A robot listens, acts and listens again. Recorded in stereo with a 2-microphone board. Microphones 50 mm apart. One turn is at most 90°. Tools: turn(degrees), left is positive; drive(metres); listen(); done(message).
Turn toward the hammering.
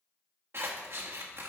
listen()
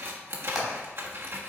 turn(degrees=-30)
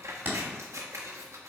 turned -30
turn(degrees=-90)
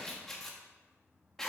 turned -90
turn(degrees=-50)
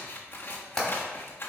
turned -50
done("Found it: hammering, straight ahead, 2 to 4 m away.")